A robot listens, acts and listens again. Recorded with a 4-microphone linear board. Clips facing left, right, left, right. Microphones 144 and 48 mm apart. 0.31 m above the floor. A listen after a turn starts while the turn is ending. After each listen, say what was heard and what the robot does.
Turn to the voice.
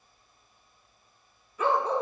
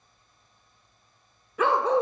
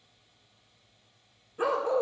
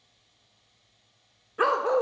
Keep listening.
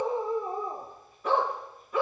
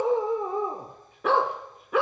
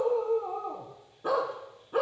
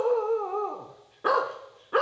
Keep listening.
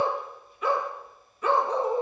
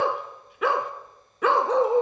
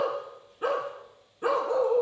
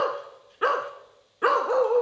I can't make out anyone speaking, only a dog barking.